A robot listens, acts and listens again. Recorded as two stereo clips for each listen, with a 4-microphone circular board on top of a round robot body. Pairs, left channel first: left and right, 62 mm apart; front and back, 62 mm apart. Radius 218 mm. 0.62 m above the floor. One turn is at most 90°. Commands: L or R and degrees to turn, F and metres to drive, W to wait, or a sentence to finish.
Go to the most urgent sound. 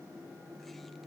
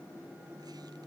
W
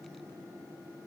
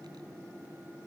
W
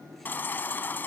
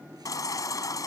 L30
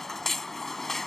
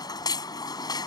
F1.0
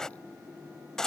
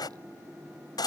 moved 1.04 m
L10
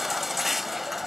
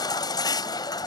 F1.0
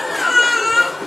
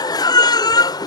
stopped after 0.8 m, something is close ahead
I am next to the baby crying.